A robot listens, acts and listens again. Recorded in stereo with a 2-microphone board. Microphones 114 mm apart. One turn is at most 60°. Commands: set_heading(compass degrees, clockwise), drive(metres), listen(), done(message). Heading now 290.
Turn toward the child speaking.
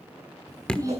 set_heading(320)
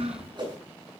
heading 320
set_heading(20)
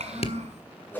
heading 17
set_heading(77)
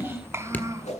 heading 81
set_heading(106)
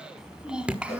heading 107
set_heading(117)
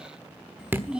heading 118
set_heading(128)
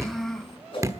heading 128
done("Found it: a child speaking, straight ahead.")